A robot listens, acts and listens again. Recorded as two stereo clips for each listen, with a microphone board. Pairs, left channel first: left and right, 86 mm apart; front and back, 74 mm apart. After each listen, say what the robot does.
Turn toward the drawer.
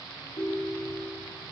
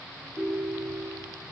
Keep listening.
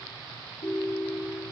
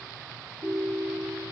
Keep listening.
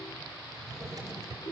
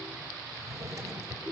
Turn 140° right.
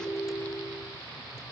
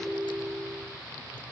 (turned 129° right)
Turn 10° right.
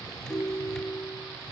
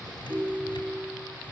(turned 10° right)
Keep listening.
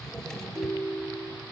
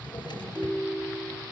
Found it: a drawer, straight ahead.